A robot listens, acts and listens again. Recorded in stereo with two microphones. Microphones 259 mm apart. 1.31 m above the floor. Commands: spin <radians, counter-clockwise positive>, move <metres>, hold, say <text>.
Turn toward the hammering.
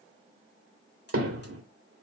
spin -1.05
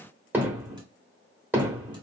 say Found it: hammering, straight ahead, 1 to 2 m away.